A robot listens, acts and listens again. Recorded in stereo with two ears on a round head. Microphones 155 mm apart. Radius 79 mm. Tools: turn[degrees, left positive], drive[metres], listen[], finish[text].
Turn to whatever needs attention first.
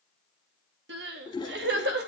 Thought: The crying: about 65° right or 115° right.
Action: turn[-65]
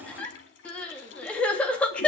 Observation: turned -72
Action: finish[Facing the crying, 2 to 4 m away.]